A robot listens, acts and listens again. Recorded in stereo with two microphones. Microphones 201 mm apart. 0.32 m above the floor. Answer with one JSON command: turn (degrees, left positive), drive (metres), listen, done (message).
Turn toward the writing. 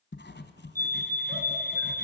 {"turn": 60}
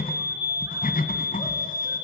{"turn": 50}
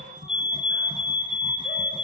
{"turn": -25}
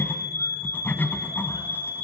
{"turn": 10}
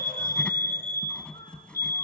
{"done": "Found it: writing, straight ahead, 1 to 2 m away."}